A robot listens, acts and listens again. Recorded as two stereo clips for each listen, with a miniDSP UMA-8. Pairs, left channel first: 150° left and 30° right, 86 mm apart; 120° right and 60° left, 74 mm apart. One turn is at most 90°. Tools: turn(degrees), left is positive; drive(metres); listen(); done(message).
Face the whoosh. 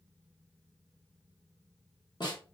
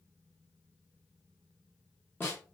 listen()
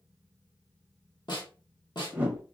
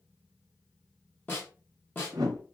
turn(degrees=40)
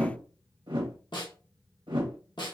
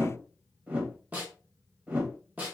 done("Found it: a whoosh, straight ahead.")